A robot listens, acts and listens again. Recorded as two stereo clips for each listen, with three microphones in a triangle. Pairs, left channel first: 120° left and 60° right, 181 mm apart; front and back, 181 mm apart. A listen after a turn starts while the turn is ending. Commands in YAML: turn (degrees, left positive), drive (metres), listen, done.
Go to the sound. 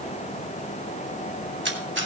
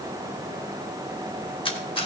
turn: -60
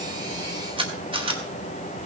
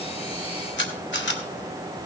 drive: 1.0
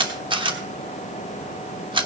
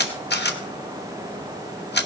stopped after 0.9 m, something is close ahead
done: "Arrived at the camera shutter, straight ahead."